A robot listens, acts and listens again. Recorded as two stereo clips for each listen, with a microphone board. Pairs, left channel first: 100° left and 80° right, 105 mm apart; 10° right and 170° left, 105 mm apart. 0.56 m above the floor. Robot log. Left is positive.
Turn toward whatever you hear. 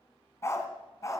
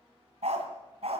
note: The dog barking: 160° left.
cmd yaw +160
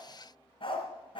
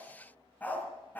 note: The dog barking is now 60° left.
cmd yaw +60
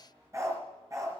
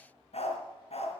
note: The dog barking is now 20° right.
cmd yaw -20
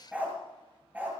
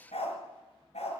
end: Facing the dog barking, 2 to 4 m away.